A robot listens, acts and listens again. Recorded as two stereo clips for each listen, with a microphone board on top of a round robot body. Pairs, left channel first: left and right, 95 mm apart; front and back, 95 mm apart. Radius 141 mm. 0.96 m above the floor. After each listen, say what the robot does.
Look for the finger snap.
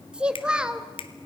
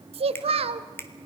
Turn 65° left.
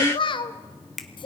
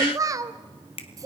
Found it: a finger snap, straight ahead.